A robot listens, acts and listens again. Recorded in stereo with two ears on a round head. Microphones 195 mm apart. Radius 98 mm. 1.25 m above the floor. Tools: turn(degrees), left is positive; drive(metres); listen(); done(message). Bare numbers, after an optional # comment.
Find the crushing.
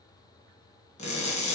# The crushing: about 35° left or 145° left.
turn(35)
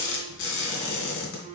# So it is at 105° left.
turn(105)
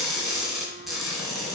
done("Found it: crushing, straight ahead.")